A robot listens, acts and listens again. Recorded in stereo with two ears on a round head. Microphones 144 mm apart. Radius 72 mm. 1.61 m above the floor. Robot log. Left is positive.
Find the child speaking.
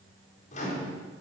cmd idle
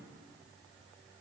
cmd idle
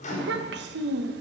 note: The child speaking: about 70° right or 110° right.
cmd yaw -70
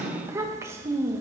note: So it is at 20° right.
cmd yaw -20
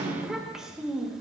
end: Facing the child speaking, 1 to 2 m away.